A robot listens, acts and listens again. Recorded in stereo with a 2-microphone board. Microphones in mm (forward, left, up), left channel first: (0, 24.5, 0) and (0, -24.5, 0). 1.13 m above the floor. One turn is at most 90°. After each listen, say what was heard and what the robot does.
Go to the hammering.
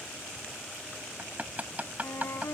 The hammering: about 30° right or 150° right. Turn 30° right.
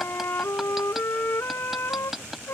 Drive 1.0 m forward.
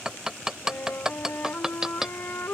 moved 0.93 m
The hammering is now 10° right. Turn 10° right.
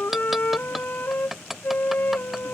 Drive 1.0 m forward.
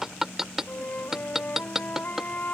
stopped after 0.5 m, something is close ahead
Arrived at the hammering, straight ahead.